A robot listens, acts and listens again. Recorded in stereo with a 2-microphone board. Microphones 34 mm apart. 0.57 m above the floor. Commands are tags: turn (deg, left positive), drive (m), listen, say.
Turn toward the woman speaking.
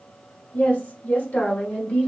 <turn deg="40"/>
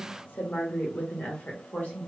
<turn deg="45"/>
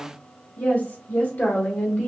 <turn deg="125"/>
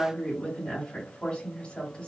<turn deg="25"/>
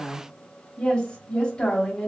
<turn deg="25"/>
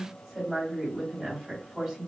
<turn deg="-15"/>
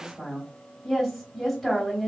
<say>Facing the woman speaking, 1 to 2 m away.</say>